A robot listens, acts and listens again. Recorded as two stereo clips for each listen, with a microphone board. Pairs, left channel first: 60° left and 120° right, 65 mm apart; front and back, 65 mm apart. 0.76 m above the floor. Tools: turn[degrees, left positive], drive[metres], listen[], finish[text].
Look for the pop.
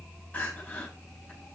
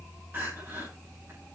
Action: listen[]
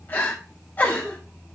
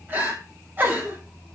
Action: listen[]
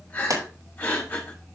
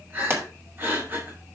Thought: The pop: 130° right.
Action: turn[-130]
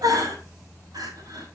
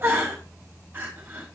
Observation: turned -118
Thought: Nothing new. It was at 15° right.
Action: turn[-15]
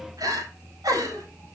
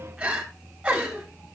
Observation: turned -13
Action: finish[Facing where the pop came from. I can't hear it now.]